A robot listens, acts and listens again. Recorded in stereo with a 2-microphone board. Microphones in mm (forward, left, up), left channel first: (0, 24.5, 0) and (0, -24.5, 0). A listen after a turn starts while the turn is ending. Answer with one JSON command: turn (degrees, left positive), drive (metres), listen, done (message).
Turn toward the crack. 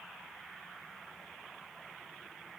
{"listen": true}
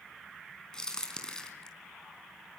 {"turn": 30}
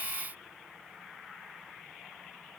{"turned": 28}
{"listen": true}
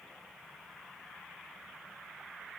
{"done": "I heard a crack, but can't make it out now. It was about 15° right or 135° left."}